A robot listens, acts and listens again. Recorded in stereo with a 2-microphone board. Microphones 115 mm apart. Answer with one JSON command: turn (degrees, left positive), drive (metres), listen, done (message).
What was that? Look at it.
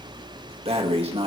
{"turn": -55}
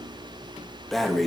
{"done": "Facing the breathing."}